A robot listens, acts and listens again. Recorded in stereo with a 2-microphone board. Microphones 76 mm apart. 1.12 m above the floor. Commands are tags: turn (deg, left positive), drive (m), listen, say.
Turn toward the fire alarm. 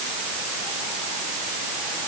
<listen/>
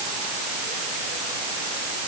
<listen/>
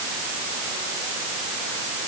<say>I can't make out a fire alarm to turn to.</say>